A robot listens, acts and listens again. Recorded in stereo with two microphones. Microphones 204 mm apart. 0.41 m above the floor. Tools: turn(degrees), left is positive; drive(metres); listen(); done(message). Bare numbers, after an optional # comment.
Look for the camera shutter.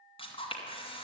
# The camera shutter: about 25° left or 155° left.
turn(25)
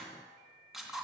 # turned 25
done("Found it: a camera shutter, straight ahead.")